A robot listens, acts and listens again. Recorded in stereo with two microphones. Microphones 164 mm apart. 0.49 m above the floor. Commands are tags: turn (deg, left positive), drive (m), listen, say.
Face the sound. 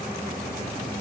<listen/>
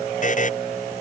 <turn deg="50"/>
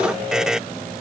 <say>Found it: a buzzer, straight ahead.</say>